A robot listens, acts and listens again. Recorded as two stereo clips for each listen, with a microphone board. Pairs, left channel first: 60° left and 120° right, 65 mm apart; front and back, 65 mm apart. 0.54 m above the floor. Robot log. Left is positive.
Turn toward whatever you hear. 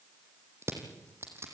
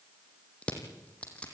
note: The crushing: 70° right.
cmd yaw -70
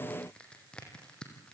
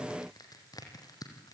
note: The crushing is now 15° right.
cmd yaw -15
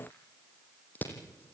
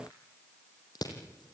end: Found it: crushing, straight ahead, 2 to 4 m away.